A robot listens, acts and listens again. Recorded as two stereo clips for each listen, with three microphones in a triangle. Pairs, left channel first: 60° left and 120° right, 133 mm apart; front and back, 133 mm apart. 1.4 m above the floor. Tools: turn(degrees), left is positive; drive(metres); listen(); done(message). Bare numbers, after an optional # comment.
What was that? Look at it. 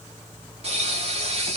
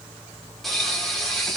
# The pop: 90° right.
turn(-90)
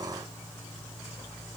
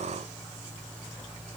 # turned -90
done("Facing where the pop came from. I can't hear it now.")